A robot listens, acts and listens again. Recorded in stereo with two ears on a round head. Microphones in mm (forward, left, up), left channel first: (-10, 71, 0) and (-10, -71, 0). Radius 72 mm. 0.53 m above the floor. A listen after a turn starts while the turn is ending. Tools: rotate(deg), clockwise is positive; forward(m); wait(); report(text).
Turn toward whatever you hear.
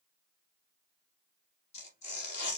rotate(-45)
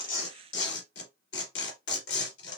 rotate(-90)
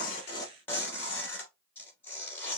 rotate(-15)
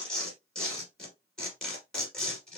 report("Facing the tearing paper, 2 to 4 m away.")